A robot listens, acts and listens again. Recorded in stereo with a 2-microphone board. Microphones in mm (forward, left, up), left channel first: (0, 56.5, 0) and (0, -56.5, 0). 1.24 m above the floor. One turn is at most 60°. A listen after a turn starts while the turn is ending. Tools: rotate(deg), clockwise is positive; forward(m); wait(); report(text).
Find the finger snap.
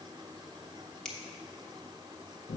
rotate(-30)
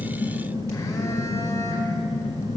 wait()
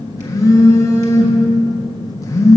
wait()
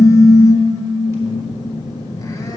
report("I heard a finger snap, but can't make it out now. It was about 25° right or 145° left.")